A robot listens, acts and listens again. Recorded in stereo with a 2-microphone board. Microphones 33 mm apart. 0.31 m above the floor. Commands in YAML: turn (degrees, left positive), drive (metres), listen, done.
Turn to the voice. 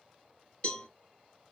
listen: true
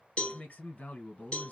turn: 60
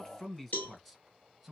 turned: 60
done: "Facing the man speaking."